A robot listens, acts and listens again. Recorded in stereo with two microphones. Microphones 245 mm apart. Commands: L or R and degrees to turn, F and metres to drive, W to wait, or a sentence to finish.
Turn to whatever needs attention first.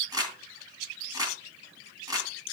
W
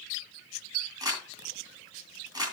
W
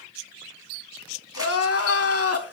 L70
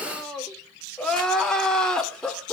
Facing the crying.